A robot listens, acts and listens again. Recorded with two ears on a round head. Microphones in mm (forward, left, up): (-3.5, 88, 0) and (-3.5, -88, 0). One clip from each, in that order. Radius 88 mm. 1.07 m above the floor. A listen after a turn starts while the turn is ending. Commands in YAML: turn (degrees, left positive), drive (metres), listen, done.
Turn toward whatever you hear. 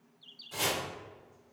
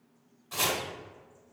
turn: -25
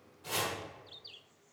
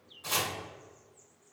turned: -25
turn: -130
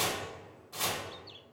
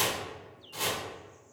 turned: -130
done: "Facing the chopping."